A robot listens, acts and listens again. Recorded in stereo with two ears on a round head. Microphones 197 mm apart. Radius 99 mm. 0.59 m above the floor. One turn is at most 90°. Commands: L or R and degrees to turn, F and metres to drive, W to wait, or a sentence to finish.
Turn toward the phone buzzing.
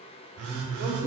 R90
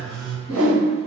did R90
Facing the phone buzzing, under 1 m away.